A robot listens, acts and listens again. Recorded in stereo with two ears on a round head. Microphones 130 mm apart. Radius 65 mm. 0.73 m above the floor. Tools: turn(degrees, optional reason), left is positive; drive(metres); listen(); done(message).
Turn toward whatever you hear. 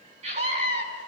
turn(degrees=-45, reason="The scream: about 45° right or 135° right.")
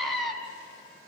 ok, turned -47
done("Found it: a scream, straight ahead, over 4 m away.")